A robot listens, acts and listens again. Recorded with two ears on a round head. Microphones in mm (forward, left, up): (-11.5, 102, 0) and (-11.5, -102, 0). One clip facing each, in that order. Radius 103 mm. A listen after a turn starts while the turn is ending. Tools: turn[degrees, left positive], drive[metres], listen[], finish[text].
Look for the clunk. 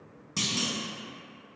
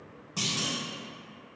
Thought: The clunk: about 30° left or 150° left.
Action: turn[30]
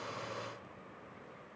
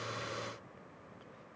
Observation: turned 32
Action: listen[]
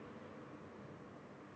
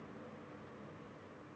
Action: finish[I heard a clunk, but can't make it out now. It was about straight ahead or 115° left.]